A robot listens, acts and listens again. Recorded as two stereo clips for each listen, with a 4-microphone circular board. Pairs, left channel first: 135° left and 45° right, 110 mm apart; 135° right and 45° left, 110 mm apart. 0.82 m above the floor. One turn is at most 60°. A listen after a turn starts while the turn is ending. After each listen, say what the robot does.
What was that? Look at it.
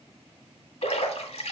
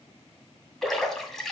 Turn 60° left.
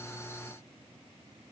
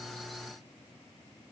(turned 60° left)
Turn 60° left.
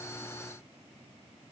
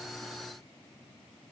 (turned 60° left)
Turn 20° left.
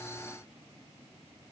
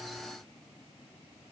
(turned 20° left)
I heard a splash from this way, but can't make it out now.